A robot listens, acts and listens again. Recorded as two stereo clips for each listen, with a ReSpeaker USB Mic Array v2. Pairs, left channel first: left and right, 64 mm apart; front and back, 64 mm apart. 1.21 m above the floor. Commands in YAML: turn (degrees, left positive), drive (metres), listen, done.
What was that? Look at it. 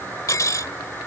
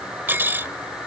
turn: 120
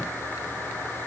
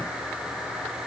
listen: true
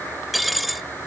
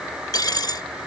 done: "Found it: cutlery clinking, straight ahead."